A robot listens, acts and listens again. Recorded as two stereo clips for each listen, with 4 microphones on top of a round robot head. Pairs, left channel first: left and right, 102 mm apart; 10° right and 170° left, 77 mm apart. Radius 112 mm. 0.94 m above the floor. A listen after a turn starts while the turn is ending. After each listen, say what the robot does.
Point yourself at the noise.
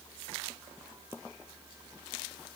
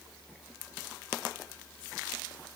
Keep listening.
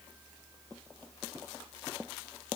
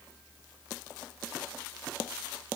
Keep listening.
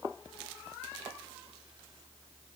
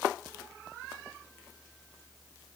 I can't make out anything to turn to.